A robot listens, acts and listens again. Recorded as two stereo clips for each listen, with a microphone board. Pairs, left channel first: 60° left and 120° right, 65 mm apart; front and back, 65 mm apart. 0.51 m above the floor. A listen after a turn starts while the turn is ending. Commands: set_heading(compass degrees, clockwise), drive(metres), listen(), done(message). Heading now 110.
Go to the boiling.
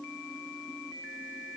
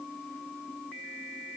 listen()
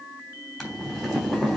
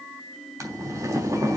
set_heading(325)
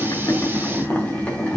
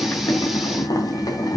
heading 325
drive(1.0)
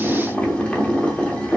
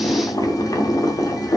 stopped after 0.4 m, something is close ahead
set_heading(335)
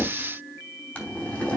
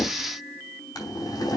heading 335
done("Something is in my way. I am facing the boiling but have not reached it.")